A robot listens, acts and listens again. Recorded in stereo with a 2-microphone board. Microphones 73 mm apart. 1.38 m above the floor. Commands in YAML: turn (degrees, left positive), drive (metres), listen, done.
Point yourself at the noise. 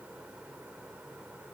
listen: true
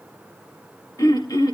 turn: 60
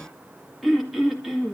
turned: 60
done: "Facing the throat clearing."